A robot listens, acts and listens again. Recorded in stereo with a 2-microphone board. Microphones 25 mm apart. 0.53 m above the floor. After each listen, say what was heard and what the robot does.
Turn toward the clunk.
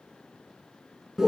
Keep listening.
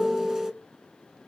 Keep listening.
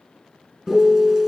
I can't make out a clunk to turn to.